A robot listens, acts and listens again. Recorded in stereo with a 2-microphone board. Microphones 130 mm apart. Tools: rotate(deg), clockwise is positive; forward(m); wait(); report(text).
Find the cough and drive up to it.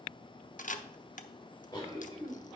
rotate(-35)
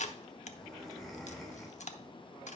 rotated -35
forward(1.0)
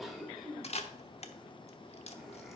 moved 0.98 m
forward(1.0)
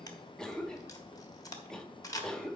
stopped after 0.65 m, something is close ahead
report("I am next to the cough.")